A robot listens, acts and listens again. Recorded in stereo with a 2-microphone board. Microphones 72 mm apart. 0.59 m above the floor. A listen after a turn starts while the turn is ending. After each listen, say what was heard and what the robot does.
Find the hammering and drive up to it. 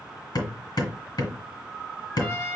Turn 90° left.
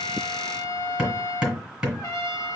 So it is at 10° right. Turn 10° right.
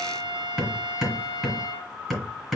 Drive 1.0 m forward.
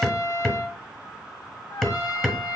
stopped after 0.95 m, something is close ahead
Arrived at the hammering, straight ahead.